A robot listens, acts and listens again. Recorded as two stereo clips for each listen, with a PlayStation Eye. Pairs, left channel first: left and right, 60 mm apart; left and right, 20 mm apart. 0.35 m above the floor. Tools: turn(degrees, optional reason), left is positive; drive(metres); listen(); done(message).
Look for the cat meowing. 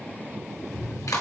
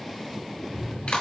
turn(degrees=60, reason="The cat meowing: about 60° left or 120° left.")
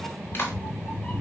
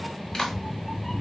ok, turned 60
turn(degrees=20, reason="So it is at 20° left.")
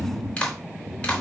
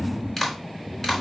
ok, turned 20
done("Facing the cat meowing.")